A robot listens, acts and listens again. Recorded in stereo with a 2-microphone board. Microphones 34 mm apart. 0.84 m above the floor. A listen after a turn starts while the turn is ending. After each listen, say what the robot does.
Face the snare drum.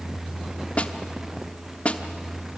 Turn 40° left.
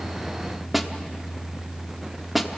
Found it: a snare drum, straight ahead.